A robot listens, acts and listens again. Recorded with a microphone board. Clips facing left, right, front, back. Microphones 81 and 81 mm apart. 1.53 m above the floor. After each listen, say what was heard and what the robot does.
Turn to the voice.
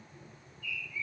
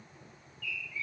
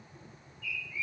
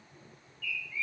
Keep listening.
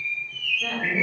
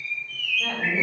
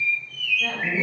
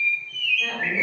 The woman speaking: 115° right. Turn 115° right.
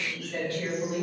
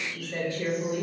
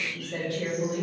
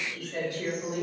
The woman speaking is now 20° right. Turn 20° right.
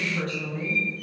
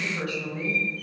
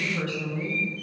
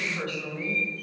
Found it: a woman speaking, straight ahead, 1 to 2 m away.